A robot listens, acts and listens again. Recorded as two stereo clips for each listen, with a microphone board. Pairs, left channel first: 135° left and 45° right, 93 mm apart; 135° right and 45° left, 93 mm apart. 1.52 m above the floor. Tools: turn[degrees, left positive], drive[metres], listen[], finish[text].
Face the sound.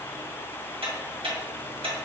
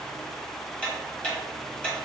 Thought: The ticking: 55° right.
Action: turn[-55]
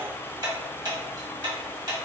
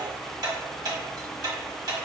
Action: finish[Facing the ticking.]